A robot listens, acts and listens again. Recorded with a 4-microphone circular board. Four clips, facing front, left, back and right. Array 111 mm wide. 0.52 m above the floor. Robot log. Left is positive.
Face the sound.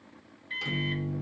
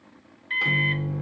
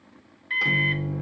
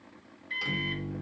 note: The microwave: 150° left.
cmd yaw +150
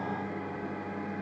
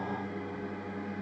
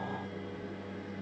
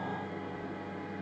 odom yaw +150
end: Found it: a microwave, straight ahead, under 1 m away.